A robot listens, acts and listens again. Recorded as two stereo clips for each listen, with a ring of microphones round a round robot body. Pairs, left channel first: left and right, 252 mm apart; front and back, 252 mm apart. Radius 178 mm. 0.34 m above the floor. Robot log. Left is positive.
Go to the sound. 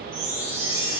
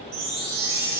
note: The chime: 155° right.
cmd yaw -155
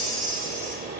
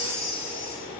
note: The chime is now 50° right.
cmd yaw -50
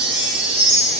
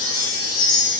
note: The chime is now 10° right.
cmd yaw -10
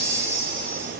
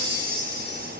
cmd fwd 1.0
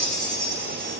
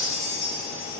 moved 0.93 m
cmd fwd 1.0
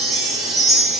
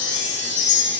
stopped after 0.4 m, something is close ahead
end: Arrived at the chime, straight ahead.